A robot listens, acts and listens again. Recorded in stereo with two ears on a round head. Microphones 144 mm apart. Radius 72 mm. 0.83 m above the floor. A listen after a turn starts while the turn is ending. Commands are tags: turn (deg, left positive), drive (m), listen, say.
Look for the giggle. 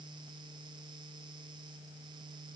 <listen/>
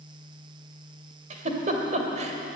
<turn deg="-45"/>
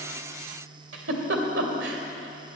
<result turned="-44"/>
<turn deg="-90"/>
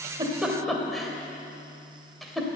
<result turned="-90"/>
<say>Found it: a giggle, straight ahead.</say>